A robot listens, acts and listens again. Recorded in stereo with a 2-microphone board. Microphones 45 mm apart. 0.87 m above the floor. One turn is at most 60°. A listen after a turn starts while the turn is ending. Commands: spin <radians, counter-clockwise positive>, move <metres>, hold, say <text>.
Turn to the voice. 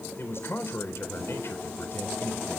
spin 1.05
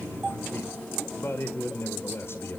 spin 1.05
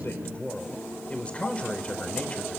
spin 0.44
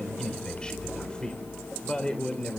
spin 0.26
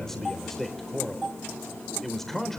say Facing the man speaking, over 4 m away.